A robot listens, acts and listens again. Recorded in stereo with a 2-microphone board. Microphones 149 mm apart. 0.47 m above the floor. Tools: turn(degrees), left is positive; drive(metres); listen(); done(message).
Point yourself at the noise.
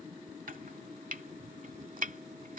turn(degrees=-65)
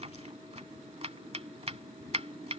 turn(degrees=-45)
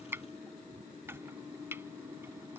turn(degrees=-15)
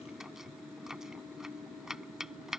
done("Found it: chopping, straight ahead.")